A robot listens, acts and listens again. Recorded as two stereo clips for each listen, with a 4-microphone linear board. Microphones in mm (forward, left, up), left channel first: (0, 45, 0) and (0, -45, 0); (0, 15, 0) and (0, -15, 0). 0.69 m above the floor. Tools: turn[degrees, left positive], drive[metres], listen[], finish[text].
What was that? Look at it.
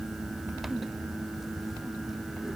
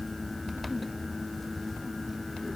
Action: listen[]
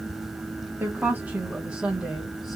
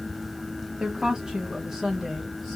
Action: turn[-30]
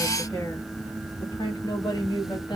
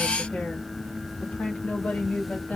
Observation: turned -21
Thought: So it is at 50° left.
Action: turn[50]
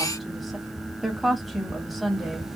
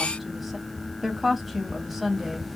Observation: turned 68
Action: finish[Found it: a woman speaking, straight ahead, 1 to 2 m away.]